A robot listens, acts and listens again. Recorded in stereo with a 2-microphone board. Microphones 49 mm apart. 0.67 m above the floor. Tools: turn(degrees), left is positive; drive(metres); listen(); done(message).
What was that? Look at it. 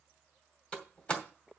turn(degrees=25)
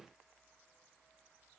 listen()
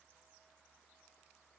done("I heard a door slam, but can't make it out now. It was about straight ahead or 130° left.")